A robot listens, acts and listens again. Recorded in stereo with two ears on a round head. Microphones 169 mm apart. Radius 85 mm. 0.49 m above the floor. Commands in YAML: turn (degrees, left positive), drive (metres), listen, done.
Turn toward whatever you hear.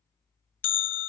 turn: 70
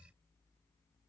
listen: true
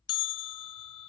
turn: 25
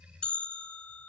done: "Found it: a bell, straight ahead."